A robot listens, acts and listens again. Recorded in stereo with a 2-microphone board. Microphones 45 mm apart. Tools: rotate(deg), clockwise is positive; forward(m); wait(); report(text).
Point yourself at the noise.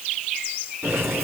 rotate(90)
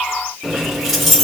report("Found it: keys jangling, straight ahead, 2 to 4 m away.")